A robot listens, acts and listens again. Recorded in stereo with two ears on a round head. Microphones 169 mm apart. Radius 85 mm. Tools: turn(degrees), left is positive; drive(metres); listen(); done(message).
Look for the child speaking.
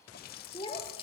turn(degrees=30)
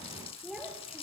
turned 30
done("Facing the child speaking, over 4 m away.")